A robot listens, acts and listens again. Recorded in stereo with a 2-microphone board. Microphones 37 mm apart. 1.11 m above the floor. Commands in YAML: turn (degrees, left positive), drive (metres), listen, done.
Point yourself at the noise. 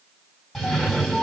turn: 30
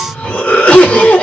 turn: 145
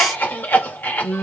turn: 70
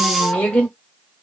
turn: 30
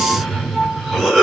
done: "Found it: a cough, straight ahead, 1 to 2 m away."